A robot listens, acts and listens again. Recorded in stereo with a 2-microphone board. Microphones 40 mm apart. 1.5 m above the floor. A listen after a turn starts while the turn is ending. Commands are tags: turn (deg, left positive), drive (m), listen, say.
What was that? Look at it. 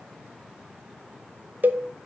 <turn deg="-50"/>
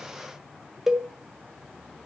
<turn deg="-15"/>
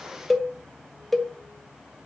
<say>Facing the cowbell.</say>